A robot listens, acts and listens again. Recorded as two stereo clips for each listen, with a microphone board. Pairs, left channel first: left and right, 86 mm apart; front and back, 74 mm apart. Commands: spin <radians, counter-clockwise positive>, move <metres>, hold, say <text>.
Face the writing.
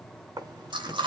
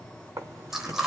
spin -2.27
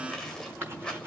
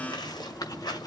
spin -0.44
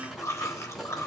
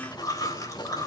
say Facing the writing, over 4 m away.